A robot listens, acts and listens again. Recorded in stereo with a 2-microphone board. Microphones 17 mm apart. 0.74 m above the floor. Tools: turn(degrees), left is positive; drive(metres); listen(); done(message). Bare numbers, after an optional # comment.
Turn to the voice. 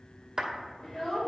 # The child speaking: about 35° left or 145° left.
turn(35)
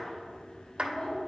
# So it is at 110° left.
turn(110)
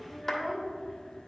# The child speaking is now 10° right.
turn(-10)
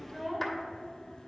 done("Found it: a child speaking, straight ahead, 1 to 2 m away.")